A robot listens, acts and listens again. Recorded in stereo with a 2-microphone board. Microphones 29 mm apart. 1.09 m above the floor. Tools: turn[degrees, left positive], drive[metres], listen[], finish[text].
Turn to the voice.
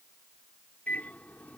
Action: listen[]
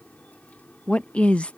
Thought: The woman speaking: about 50° left or 130° left.
Action: turn[50]
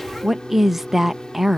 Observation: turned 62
Thought: So it is at 10° right.
Action: turn[-10]
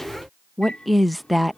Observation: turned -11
Action: finish[Facing the woman speaking.]